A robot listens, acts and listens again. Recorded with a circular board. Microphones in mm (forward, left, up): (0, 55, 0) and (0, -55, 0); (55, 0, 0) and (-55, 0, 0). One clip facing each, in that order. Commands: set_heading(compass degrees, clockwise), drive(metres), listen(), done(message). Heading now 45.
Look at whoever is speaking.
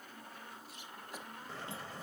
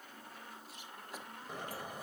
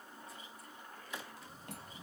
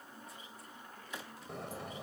listen()
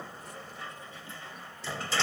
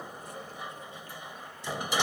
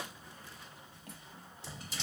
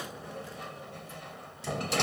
listen()
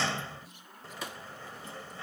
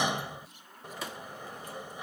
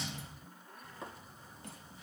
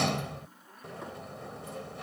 done("I can't make out anyone speaking to turn to.")